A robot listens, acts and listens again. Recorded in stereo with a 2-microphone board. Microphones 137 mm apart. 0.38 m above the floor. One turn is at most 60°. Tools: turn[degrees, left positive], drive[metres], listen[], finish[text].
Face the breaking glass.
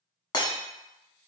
Thought: The breaking glass: about 35° left or 145° left.
Action: turn[35]
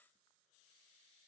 Action: listen[]
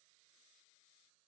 Action: finish[I heard breaking glass, but can't make it out now. It was about straight ahead or 110° left.]